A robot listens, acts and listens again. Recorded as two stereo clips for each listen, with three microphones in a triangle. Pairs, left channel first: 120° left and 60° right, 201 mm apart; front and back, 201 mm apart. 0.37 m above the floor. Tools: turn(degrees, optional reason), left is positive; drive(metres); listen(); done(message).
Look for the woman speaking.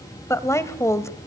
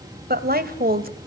turn(degrees=-170, reason="The woman speaking: 170° right.")
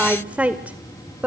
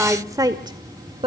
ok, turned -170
turn(degrees=-135, reason="The woman speaking is now 135° right.")
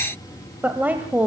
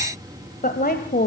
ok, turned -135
turn(degrees=20, reason="The woman speaking is now 20° left.")
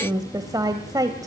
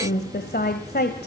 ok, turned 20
done("Facing the woman speaking, 1 to 2 m away.")